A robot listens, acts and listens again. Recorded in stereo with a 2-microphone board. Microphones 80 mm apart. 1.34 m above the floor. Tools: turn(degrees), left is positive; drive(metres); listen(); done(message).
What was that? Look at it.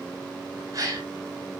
turn(degrees=-50)
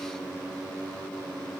listen()
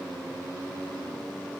done("I heard a gasp, but can't make it out now. It was about straight ahead or 80° right.")